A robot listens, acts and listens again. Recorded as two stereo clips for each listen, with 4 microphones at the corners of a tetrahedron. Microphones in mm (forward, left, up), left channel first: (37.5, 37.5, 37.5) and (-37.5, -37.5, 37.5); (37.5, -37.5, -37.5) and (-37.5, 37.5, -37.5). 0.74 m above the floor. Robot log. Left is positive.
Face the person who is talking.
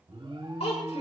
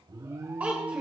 note: The child speaking: 60° left.
cmd yaw +60
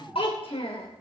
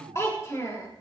note: The child speaking is now 15° left.
cmd yaw +15
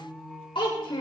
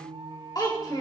end: Found it: a child speaking, straight ahead, 2 to 4 m away.